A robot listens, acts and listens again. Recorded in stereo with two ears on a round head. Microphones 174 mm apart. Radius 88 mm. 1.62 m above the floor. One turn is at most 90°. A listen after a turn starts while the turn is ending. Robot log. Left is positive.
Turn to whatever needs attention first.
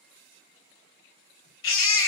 note: The baby crying: about 70° left or 110° left.
cmd yaw +70
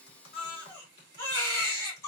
note: So it is at 15° left.
cmd yaw +15
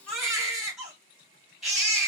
end: Found it: a baby crying, straight ahead.